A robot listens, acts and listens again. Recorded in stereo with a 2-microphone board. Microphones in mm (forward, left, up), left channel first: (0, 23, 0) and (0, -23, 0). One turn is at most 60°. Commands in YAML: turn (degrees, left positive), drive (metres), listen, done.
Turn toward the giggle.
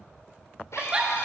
turn: -20
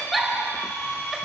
done: "Facing the giggle, 2 to 4 m away."